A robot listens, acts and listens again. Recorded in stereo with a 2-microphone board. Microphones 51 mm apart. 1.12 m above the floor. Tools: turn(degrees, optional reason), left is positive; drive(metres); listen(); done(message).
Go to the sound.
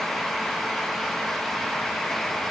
listen()
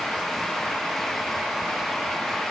listen()
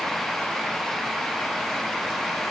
done("I can't make out anything.")